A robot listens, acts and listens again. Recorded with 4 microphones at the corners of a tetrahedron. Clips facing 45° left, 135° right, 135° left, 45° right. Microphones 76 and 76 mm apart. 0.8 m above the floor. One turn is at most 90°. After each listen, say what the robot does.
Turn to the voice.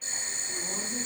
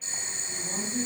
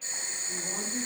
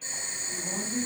Turn 45° left.
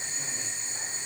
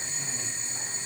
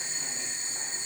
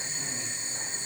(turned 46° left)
Keep listening.
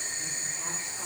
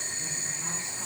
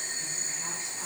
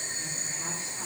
Keep listening.
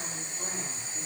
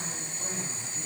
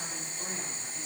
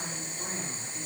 Facing where the woman speaking came from. I can't hear it now.